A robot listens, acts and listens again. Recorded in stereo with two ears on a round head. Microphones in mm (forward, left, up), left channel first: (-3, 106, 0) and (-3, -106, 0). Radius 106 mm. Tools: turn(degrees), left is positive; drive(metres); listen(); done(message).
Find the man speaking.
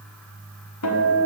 listen()
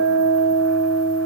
listen()
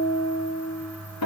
done("I can't make out a man speaking, only a guitar.")